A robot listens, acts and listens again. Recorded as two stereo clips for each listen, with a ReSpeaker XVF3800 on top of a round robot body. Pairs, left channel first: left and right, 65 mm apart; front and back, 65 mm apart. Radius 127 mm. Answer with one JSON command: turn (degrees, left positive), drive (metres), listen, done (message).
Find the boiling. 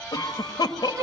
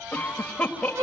{"listen": true}
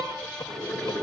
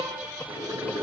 {"turn": 175}
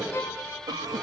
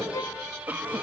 {"listen": true}
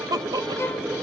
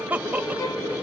{"turn": -15}
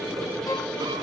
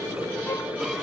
{"done": "Facing the boiling, over 4 m away."}